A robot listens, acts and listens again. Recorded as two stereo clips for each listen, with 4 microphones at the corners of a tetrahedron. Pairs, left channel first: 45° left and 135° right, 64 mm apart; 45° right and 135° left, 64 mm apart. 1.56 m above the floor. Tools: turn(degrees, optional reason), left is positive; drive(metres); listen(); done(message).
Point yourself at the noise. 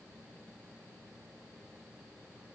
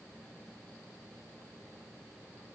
listen()
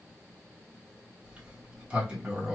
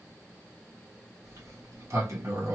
turn(degrees=155, reason="The sliding door: 155° left.")
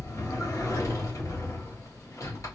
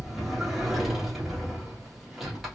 turn(degrees=50, reason="The sliding door is now 50° left.")
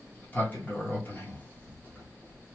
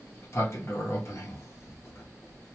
turn(degrees=-10, reason="The sliding door is now 10° right.")
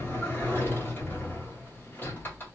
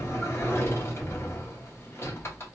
done("Facing the sliding door.")